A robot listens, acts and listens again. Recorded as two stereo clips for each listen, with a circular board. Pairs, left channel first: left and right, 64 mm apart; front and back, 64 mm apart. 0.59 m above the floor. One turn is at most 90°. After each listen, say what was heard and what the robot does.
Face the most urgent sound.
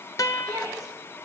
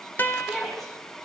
The shout: 85° right. Turn 85° right.
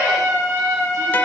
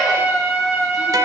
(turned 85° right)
Keep listening.
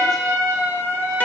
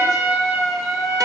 Keep listening.
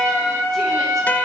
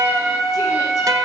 I heard a shout from this way, but can't make it out now.